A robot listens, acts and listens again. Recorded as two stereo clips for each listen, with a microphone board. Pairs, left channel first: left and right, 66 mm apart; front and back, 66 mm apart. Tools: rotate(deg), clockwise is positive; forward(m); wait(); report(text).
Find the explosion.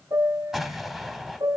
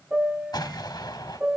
report("Facing the explosion, 1 to 2 m away.")